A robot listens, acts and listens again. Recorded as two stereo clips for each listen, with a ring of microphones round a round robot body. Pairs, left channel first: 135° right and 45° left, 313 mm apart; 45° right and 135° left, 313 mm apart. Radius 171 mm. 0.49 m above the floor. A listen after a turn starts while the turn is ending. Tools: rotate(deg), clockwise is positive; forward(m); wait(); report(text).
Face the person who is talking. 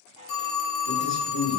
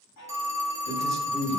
rotate(-40)
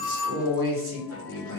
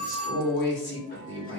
report("Facing the man speaking.")